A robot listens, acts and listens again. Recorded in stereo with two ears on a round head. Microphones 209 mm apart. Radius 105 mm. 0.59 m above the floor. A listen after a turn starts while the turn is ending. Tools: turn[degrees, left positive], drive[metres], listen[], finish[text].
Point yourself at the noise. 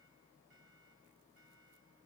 Action: listen[]
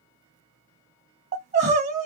Thought: The crying: about 30° right or 150° right.
Action: turn[-30]
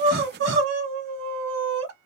Thought: So it is at 120° right.
Action: turn[-120]
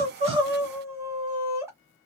Thought: The crying is now 10° right.
Action: turn[-10]
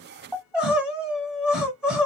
Action: finish[Found it: crying, straight ahead, under 1 m away.]